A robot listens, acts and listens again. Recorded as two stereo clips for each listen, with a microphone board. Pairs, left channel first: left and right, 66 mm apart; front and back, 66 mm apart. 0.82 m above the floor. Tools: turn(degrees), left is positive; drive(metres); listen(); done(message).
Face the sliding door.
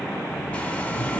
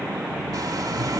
turn(degrees=-70)
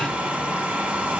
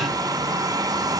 listen()
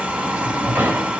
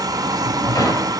turn(degrees=-30)
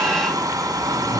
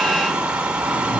turn(degrees=25)
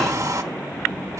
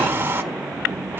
listen()
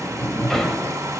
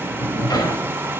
done("Found it: a sliding door, straight ahead.")